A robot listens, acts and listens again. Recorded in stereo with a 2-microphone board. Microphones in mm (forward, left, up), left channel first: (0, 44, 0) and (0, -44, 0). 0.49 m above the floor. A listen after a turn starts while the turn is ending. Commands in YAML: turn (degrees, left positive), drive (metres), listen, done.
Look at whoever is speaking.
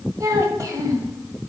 turn: -40
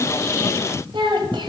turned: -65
turn: -75
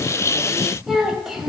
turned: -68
done: "Found it: a child speaking, straight ahead."